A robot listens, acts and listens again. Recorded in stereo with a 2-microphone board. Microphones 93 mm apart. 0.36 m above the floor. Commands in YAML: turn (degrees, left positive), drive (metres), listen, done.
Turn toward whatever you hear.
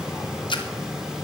turn: 60
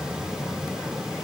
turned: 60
listen: true
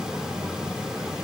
done: "I heard a splash, but can't make it out now. It was about straight ahead or 60° left."